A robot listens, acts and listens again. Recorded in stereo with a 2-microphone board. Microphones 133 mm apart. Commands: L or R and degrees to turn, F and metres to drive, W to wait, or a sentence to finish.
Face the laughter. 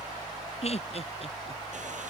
L50
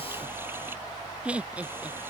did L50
R10
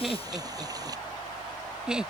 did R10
Found it: laughter, straight ahead.